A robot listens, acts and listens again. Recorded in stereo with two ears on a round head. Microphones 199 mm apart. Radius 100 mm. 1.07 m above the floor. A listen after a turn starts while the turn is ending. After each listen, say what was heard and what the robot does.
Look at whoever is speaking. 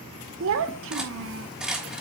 The child speaking: about 60° right or 120° right. Turn 60° right.
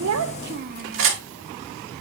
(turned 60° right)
So it is at 50° right. Turn 50° right.
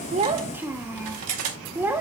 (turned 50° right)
The child speaking is now 10° right. Turn 10° right.
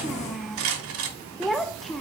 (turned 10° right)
Found it: a child speaking, straight ahead, under 1 m away.